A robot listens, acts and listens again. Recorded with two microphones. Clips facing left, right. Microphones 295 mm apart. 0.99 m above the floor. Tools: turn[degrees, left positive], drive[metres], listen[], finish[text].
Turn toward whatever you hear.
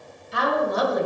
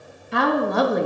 Thought: The woman speaking: about 65° right or 115° right.
Action: turn[-65]
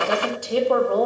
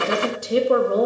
Thought: So it is at 25° right.
Action: turn[-25]
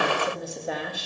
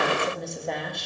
Action: finish[Facing the woman speaking, 1 to 2 m away.]